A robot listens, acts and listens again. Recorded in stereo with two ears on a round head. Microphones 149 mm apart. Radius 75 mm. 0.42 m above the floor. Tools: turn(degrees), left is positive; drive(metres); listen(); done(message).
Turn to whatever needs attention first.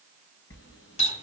listen()
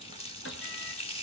listen()
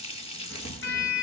done("I can't make out anything urgent to turn to.")